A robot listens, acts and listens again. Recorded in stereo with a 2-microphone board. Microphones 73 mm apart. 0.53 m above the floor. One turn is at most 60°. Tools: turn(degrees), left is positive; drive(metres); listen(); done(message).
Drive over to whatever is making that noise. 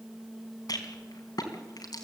turn(degrees=60)
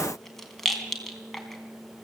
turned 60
drive(metres=1.0)
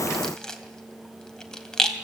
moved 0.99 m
turn(degrees=10)
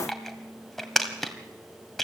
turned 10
drive(metres=1.0)
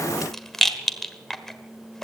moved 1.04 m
drive(metres=1.0)
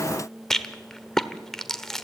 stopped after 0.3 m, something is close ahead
turn(degrees=10)
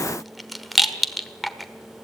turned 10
done("I am next to the rattle.")